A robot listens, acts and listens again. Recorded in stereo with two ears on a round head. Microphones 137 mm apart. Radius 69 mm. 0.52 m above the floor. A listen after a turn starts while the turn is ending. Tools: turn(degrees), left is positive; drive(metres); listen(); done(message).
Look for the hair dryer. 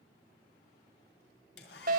turn(degrees=90)
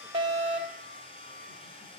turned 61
turn(degrees=35)
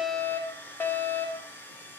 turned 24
turn(degrees=15)
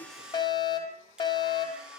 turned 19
done("Facing the hair dryer.")